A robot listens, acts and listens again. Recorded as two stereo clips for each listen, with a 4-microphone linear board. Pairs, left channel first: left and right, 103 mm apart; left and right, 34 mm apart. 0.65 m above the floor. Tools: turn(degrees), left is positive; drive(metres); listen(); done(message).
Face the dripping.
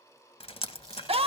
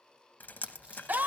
turn(degrees=65)
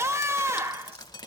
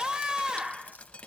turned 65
turn(degrees=45)
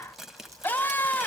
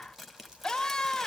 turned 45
done("Found it: dripping, straight ahead.")